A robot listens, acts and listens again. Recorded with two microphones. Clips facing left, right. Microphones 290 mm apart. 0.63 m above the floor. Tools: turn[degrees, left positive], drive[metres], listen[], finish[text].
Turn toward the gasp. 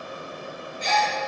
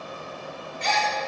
Thought: The gasp: about 70° right or 110° right.
Action: turn[-70]
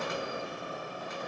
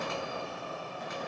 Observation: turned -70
Action: listen[]
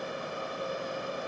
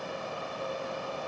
Action: finish[I heard a gasp, but can't make it out now. It was about straight ahead or 40° right.]